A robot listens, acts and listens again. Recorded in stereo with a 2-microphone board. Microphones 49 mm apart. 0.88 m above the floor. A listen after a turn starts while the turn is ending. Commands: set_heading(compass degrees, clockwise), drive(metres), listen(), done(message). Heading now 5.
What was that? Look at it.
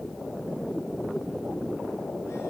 listen()
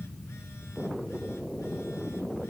listen()
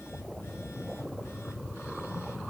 done("I can't make out anything to turn to.")